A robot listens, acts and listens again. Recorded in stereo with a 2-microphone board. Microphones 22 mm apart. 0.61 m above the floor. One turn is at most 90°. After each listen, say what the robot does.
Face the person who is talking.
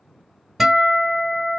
Keep listening.
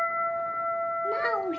Turn 25° left.
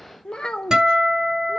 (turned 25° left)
Turn 90° left.
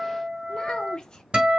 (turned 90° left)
Turn 40° left.
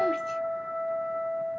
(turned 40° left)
Keep listening.
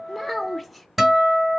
Facing the child speaking, under 1 m away.